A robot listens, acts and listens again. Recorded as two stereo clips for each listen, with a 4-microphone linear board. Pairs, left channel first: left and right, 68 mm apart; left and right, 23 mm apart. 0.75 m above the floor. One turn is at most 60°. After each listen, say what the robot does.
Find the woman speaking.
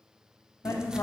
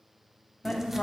Turn 60° left.
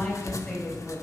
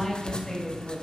Facing the woman speaking, 2 to 4 m away.